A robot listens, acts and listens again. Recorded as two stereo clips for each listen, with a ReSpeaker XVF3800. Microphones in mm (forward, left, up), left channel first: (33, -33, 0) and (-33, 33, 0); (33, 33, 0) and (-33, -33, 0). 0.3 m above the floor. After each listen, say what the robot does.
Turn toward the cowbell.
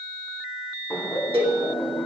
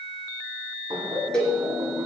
Turn 125° left.
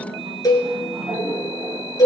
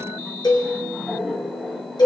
Facing the cowbell, 2 to 4 m away.